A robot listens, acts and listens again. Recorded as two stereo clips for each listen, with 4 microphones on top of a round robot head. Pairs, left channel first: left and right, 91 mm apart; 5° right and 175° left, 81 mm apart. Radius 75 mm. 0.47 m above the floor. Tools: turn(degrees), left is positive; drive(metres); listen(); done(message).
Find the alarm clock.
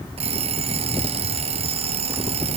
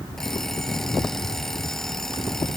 turn(degrees=-90)
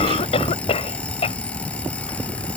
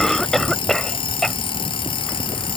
turn(degrees=10)
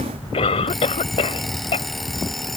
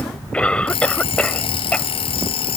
done("Found it: an alarm clock, straight ahead.")